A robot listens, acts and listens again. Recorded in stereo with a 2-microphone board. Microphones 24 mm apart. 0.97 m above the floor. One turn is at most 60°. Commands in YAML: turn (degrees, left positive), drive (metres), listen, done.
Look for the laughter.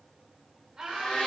turn: -30
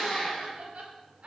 turn: -60
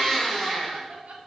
turn: -60
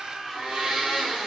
turn: -10
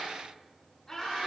turn: 15
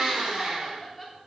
done: "Facing the laughter, 2 to 4 m away."